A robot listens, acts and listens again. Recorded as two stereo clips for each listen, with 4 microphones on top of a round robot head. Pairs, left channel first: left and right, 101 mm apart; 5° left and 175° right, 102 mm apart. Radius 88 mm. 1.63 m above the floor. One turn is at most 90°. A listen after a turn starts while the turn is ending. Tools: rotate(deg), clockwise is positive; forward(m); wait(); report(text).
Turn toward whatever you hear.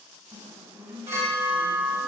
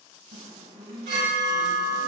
rotate(90)
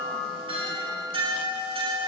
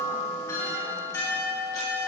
rotate(65)
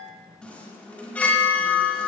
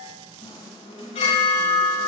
rotate(-15)
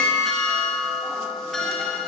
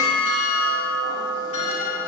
report("Facing the chime, over 4 m away.")